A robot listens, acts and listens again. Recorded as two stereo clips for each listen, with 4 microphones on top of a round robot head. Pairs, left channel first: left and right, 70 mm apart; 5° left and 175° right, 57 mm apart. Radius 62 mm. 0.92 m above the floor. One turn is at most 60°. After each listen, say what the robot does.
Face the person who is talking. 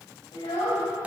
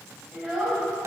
Turn 60° left.
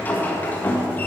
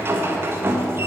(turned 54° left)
Turn 50° left.
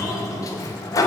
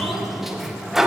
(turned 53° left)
Keep listening.
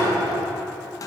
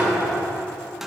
I heard a child speaking from this way, but can't make it out now.